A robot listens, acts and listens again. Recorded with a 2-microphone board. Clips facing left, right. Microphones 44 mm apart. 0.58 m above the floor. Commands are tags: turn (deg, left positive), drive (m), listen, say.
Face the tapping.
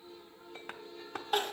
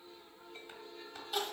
<turn deg="65"/>
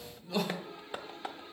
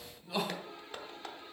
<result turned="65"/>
<turn deg="20"/>
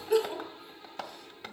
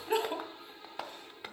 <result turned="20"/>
<say>Found it: tapping, straight ahead.</say>